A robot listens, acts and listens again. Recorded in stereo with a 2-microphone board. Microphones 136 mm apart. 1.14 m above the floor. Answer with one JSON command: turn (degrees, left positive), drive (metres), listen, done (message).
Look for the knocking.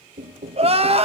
{"turn": -90}
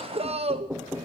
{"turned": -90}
{"done": "Facing the knocking."}